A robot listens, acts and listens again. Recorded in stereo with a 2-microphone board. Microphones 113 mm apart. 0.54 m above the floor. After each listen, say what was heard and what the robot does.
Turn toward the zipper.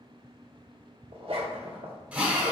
The zipper: about 70° right or 110° right. Turn 70° right.
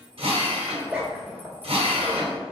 So it is at 10° right. Turn 10° right.
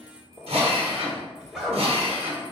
Facing the zipper, 1 to 2 m away.